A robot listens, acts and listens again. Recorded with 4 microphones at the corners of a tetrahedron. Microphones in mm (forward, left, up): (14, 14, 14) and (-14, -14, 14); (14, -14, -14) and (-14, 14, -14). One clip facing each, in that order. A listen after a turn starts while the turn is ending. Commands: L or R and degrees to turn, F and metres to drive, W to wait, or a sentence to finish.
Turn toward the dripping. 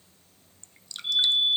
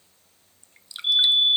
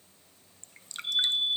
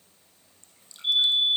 R60
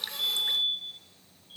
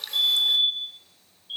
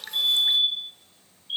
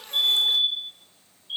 W
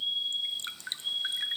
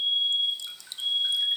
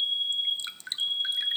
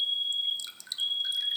Found it: dripping, straight ahead.